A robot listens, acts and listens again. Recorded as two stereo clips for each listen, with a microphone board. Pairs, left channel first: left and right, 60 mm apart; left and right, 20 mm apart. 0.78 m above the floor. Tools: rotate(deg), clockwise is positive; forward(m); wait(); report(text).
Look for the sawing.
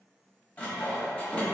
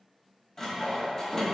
rotate(-25)
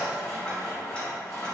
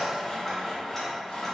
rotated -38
rotate(-115)
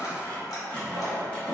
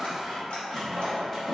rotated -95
rotate(-20)
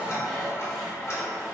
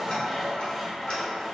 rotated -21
report("Facing the sawing, 1 to 2 m away.")